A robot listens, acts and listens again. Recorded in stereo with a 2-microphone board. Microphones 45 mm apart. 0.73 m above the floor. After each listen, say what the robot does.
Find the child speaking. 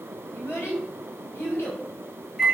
Turn 70° left.
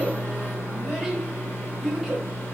Found it: a child speaking, straight ahead.